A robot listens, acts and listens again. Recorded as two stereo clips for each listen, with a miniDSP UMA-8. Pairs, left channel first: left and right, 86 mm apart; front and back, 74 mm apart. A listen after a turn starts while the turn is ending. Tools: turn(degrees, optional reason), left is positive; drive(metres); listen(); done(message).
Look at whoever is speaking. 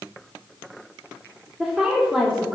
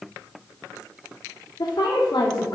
done("Facing the woman speaking, 2 to 4 m away.")